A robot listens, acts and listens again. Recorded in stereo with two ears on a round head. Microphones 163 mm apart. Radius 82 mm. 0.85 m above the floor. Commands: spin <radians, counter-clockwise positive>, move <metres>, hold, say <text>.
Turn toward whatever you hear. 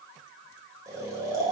spin -0.26
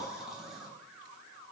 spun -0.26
say Facing the snoring.